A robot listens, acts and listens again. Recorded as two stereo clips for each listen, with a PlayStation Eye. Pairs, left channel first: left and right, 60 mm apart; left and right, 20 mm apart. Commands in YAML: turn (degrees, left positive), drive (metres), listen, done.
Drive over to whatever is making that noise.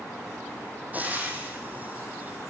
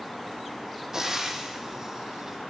turn: -25
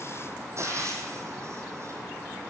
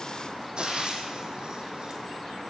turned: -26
turn: -125
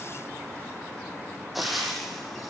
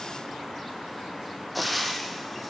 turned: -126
drive: 1.0
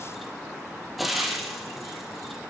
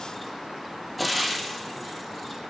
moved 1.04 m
drive: 1.0
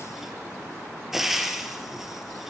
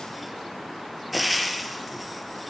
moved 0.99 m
drive: 1.0
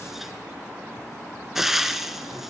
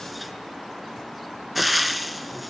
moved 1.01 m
drive: 1.0
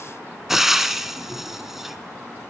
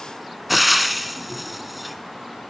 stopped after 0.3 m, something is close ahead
done: "I am next to the frying."